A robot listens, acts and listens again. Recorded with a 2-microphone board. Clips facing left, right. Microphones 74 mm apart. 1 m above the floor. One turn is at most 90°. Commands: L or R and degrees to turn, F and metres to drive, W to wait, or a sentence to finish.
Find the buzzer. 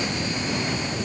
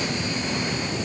W
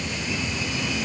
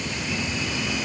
W
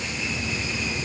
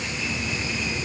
I can't make out a buzzer.